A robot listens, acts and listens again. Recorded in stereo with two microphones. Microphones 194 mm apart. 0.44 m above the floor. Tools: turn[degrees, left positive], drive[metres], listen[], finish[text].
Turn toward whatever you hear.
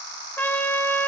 Action: turn[30]
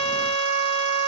Thought: So it is at 140° left.
Action: turn[140]
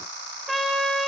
Action: finish[Facing the trumpet, 1 to 2 m away.]